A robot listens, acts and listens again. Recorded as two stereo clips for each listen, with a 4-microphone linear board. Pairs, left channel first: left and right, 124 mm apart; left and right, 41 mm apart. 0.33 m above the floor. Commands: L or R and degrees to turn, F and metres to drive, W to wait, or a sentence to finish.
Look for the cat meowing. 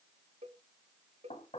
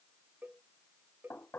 W
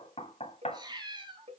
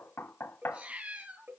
R40
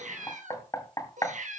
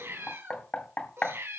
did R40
R95
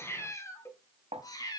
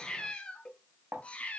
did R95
L30
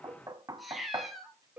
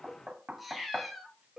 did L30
Facing the cat meowing.